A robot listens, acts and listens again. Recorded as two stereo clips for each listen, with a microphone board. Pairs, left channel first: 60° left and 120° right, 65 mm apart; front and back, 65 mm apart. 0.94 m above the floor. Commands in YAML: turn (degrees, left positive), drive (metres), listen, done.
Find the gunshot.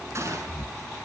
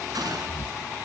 turn: -165
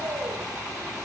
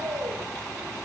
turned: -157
done: "I heard a gunshot from this way, but can't make it out now."